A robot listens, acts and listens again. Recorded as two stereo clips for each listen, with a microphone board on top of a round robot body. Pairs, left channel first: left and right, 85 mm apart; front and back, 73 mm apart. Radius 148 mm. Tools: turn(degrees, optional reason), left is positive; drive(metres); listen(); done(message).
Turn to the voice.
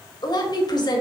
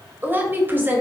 turn(degrees=120, reason="The woman speaking: 120° left.")
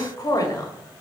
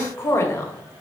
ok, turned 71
turn(degrees=50, reason="The woman speaking is now 50° left.")
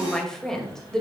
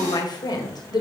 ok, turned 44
done("Found it: a woman speaking, straight ahead, 2 to 4 m away.")